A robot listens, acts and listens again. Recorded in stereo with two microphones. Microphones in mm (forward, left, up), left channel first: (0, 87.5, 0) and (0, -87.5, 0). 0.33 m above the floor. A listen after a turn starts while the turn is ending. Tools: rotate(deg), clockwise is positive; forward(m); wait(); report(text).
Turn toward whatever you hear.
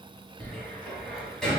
rotate(-30)
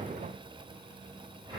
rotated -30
rotate(25)
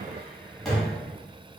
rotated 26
report("Facing the cupboard door.")